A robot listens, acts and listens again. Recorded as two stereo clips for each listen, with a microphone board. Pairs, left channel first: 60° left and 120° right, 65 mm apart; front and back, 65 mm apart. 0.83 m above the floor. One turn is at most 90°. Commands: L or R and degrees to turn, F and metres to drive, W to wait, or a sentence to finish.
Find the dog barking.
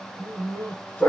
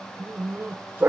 L90
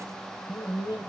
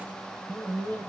L55
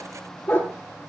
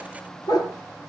Found it: a dog barking, straight ahead.